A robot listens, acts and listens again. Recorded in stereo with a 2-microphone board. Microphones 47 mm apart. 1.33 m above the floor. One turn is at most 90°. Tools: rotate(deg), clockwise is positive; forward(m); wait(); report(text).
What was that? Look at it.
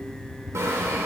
rotate(75)
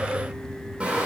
rotate(20)
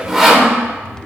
report("Facing the sawing.")